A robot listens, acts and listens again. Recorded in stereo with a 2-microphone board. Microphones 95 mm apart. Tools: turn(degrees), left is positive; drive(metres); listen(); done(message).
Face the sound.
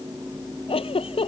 turn(degrees=90)
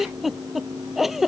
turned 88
done("Facing the giggle.")